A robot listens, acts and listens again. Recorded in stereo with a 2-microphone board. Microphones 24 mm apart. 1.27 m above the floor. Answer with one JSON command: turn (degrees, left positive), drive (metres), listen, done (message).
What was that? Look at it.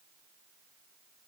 {"listen": true}
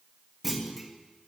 {"turn": -30}
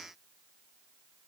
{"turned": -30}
{"listen": true}
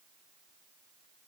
{"done": "I heard a clunk, but can't make it out now. It was about 25° left or 145° right."}